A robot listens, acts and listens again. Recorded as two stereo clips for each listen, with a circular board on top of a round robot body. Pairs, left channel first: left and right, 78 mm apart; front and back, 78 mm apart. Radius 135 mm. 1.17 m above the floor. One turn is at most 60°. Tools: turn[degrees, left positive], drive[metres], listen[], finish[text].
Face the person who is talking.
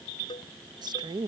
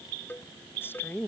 Thought: The woman speaking: 70° right.
Action: turn[-60]
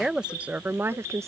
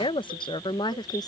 Thought: The woman speaking is now 35° right.
Action: turn[-35]
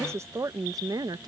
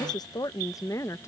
Thought: The woman speaking is now 55° right.
Action: turn[-55]
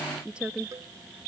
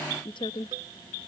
Thought: The woman speaking is now 15° right.
Action: turn[-15]
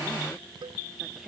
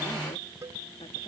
Action: finish[Found it: a woman speaking, straight ahead.]